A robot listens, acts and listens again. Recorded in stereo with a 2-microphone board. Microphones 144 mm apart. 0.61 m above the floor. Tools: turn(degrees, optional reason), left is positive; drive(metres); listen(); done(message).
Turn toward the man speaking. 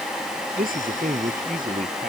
turn(degrees=-75, reason="The man speaking: about 75° right or 105° right.")
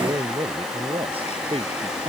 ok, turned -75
turn(degrees=-40, reason="So it is at 40° right.")
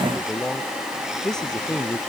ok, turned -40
done("Facing the man speaking.")